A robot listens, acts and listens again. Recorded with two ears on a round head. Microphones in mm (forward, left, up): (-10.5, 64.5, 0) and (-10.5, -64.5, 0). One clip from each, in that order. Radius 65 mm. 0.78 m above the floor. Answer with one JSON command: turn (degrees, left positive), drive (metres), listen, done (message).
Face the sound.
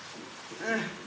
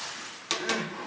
{"turn": 25}
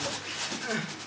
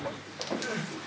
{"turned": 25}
{"turn": 130}
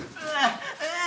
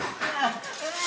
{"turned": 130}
{"turn": 50}
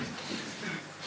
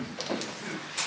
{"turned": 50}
{"turn": 20}
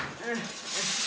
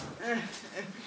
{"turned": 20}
{"done": "Found it: crying, straight ahead."}